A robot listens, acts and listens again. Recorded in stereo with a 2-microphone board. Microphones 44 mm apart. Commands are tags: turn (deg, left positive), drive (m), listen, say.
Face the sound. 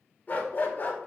<turn deg="45"/>
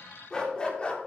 <turn deg="25"/>
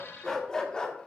<turn deg="25"/>
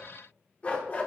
<turn deg="40"/>
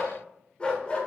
<turn deg="25"/>
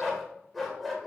<say>Found it: a dog barking, straight ahead.</say>